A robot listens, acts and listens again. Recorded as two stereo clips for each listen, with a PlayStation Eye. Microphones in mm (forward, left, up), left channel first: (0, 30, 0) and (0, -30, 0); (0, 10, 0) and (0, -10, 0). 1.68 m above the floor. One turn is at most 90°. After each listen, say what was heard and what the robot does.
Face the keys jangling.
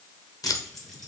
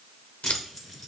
Turn 30° left.
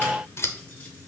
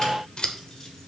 Keep listening.
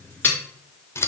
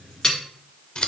So it is at 150° left. Turn 90° left.
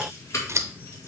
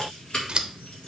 The keys jangling is now 55° left. Turn 55° left.
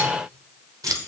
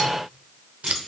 The keys jangling is now 10° left. Turn 10° left.
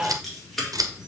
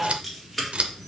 Found it: keys jangling, straight ahead.